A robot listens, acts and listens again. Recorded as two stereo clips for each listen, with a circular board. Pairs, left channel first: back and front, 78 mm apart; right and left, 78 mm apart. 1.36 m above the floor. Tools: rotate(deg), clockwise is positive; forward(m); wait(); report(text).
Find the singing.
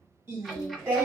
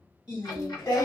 rotate(65)
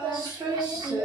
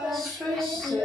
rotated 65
rotate(15)
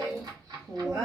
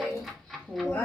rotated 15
rotate(30)
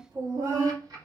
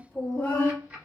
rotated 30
rotate(30)
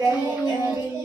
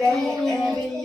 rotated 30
report("Found it: singing, straight ahead.")